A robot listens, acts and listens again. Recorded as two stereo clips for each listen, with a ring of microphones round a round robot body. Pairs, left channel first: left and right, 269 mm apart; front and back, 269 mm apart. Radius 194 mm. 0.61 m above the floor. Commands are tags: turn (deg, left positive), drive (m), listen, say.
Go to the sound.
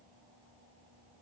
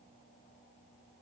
<listen/>
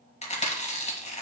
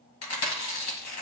<turn deg="25"/>
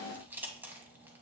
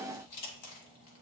<drive m="1.0"/>
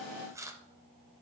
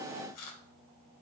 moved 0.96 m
<turn deg="-10"/>
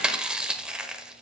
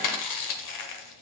<drive m="1.0"/>
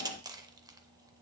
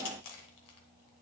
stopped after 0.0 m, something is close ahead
<turn deg="-10"/>
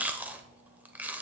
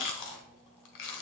<say>I am next to the chewing.</say>